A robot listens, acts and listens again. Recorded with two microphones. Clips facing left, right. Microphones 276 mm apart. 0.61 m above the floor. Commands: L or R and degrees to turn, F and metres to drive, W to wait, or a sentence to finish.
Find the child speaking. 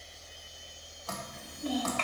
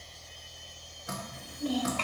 R45
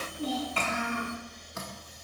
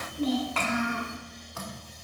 R90
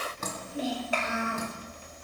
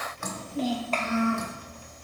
L10
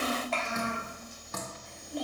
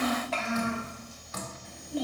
Found it: a child speaking, straight ahead, 1 to 2 m away.